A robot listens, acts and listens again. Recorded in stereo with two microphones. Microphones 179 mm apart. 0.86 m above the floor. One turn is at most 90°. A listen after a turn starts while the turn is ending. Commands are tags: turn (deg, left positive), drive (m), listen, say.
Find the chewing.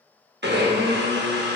<listen/>
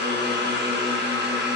<listen/>
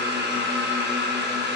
<say>I can't make out chewing, only a blender.</say>